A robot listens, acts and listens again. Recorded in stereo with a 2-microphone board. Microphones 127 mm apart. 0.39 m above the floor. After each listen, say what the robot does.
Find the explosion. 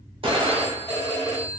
Turn 50° right.
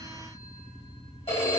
Keep listening.
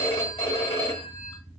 I heard an explosion, but can't make it out now. It was about straight ahead or 80° right.